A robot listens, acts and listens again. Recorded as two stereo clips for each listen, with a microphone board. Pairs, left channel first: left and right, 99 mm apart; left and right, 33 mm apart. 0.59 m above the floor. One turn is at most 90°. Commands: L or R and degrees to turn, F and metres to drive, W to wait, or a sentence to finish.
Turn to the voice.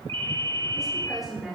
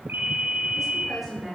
R30
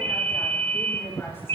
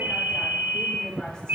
W
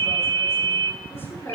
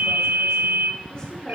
L25
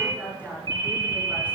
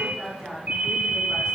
R15
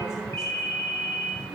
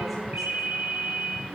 W
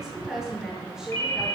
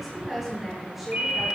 Facing the woman speaking, over 4 m away.